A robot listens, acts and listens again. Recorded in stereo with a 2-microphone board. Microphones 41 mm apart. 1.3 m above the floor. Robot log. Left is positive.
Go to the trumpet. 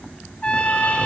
note: The trumpet: about 25° left or 155° left.
cmd yaw +25
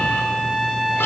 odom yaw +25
cmd fwd 1.0
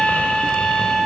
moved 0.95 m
note: The trumpet is now 10° left.
cmd yaw +10
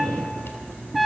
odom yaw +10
cmd fwd 1.0
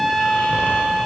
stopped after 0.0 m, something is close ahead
end: I am next to the trumpet.